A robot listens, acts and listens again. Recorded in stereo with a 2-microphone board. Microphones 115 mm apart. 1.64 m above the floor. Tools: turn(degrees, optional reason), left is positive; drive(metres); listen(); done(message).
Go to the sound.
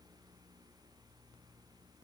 listen()
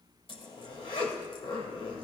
turn(degrees=55, reason="The zipper: about 55° left or 125° left.")
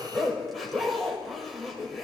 drive(metres=1.0)
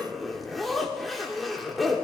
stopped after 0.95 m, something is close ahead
done("I am next to the zipper.")